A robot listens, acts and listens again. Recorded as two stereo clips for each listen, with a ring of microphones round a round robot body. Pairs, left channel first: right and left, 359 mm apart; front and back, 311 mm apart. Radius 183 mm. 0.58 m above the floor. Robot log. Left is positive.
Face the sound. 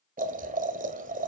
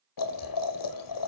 note: The boiling: 20° left.
cmd yaw +20
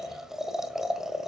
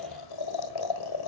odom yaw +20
end: Found it: boiling, straight ahead, 1 to 2 m away.